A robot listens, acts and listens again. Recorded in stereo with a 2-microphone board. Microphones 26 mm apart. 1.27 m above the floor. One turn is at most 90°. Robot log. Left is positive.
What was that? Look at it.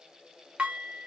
note: The dishes clattering: about 60° right or 120° right.
cmd yaw -60
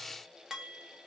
note: So it is at 25° right.
cmd yaw -25
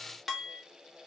end: Facing the dishes clattering.